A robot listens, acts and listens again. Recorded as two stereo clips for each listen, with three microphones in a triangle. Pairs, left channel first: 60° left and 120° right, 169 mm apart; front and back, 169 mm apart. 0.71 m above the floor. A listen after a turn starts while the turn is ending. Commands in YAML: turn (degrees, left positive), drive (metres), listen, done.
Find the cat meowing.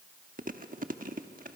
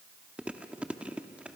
listen: true
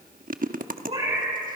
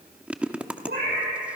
turn: -175
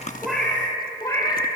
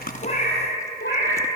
done: "Facing the cat meowing."